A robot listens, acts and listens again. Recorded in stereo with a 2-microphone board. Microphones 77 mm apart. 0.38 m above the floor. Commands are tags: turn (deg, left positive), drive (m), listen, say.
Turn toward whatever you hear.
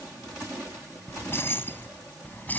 <turn deg="25"/>
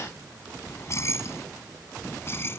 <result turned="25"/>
<turn deg="30"/>
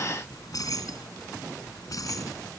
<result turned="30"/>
<turn deg="130"/>
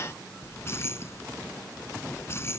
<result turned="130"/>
<turn deg="35"/>
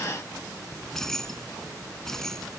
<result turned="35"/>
<say>Found it: keys jangling, straight ahead.</say>